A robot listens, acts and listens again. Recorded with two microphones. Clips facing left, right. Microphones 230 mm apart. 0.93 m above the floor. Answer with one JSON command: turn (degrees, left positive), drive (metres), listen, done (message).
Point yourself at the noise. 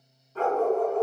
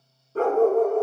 {"turn": -50}
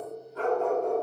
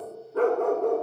{"turn": -75}
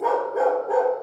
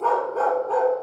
{"turn": 15}
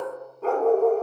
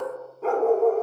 {"done": "Found it: a dog barking, straight ahead."}